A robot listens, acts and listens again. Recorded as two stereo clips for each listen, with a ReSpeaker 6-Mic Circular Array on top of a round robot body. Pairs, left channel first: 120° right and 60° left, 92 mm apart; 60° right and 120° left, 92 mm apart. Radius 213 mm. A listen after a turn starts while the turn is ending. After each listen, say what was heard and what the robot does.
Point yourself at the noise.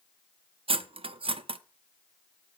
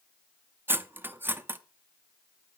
The cutlery clinking: 55° left. Turn 55° left.
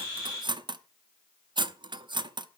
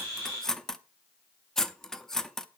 The cutlery clinking is now 25° left. Turn 25° left.
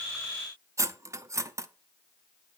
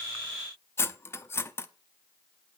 Facing the cutlery clinking.